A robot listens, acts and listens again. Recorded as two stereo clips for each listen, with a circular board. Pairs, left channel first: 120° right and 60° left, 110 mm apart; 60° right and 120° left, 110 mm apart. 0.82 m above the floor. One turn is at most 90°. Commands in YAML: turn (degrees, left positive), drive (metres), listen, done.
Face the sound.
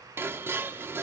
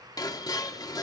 turn: -10
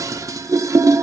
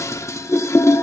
done: "Facing the dishes clattering."